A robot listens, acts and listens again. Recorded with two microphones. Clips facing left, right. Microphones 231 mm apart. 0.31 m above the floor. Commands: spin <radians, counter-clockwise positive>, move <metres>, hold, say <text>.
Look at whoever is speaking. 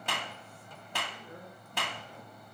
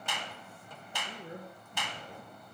spin -1.57
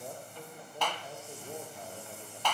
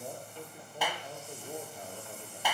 say Facing the man speaking, over 4 m away.